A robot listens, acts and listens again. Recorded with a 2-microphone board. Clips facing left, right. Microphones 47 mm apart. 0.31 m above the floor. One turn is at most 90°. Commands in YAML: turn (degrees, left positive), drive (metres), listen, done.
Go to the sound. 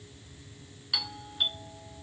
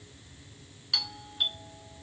turn: 30
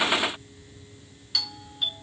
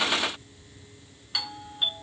turn: -20
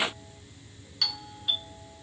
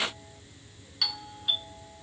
drive: 1.0
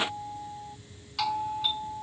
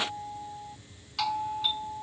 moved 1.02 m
drive: 1.0
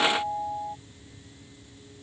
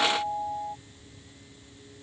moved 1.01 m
drive: 1.0
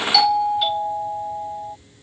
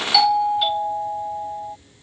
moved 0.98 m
drive: 1.0
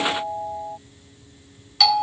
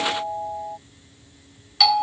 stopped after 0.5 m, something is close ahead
done: "I am next to the doorbell."